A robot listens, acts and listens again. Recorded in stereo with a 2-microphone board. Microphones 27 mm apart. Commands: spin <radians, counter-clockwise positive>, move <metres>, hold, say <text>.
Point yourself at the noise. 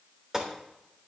spin -0.35
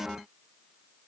hold
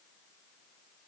say I heard a gunshot, but can't make it out now. It was about straight ahead or 140° right.